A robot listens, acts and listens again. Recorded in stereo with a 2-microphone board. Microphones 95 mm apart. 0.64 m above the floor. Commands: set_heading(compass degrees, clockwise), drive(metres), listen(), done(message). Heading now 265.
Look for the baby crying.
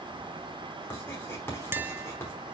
listen()
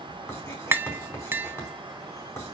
listen()
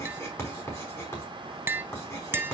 done("I can't make out a baby crying to turn to.")